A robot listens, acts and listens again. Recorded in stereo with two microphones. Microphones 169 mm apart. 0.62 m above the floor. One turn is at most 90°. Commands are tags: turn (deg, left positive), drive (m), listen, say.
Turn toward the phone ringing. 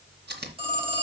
<turn deg="-30"/>
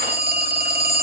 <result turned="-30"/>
<turn deg="-90"/>
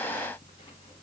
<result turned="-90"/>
<turn deg="-30"/>
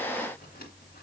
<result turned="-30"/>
<listen/>
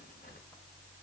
<say>I heard a phone ringing from this way, but can't make it out now.</say>